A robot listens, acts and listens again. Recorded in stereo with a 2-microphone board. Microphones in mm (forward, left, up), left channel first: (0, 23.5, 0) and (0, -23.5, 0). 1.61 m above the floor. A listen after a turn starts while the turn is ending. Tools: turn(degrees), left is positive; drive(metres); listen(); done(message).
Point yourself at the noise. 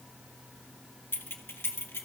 turn(degrees=65)
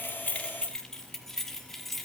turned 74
done("Found it: keys jangling, straight ahead.")